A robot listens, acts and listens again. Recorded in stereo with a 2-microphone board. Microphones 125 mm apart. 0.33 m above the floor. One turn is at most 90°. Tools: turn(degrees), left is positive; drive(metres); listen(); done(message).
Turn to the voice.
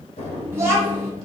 turn(degrees=-20)
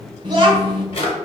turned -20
turn(degrees=-90)
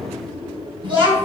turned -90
turn(degrees=-50)
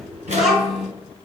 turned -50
done("Facing the child speaking.")